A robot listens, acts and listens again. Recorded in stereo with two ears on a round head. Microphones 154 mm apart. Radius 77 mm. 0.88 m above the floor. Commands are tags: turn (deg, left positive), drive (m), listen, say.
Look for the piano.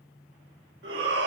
<listen/>
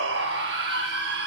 <listen/>
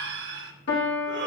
<turn deg="65"/>
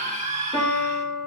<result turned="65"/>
<turn deg="10"/>
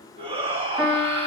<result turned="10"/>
<say>Facing the piano, 2 to 4 m away.</say>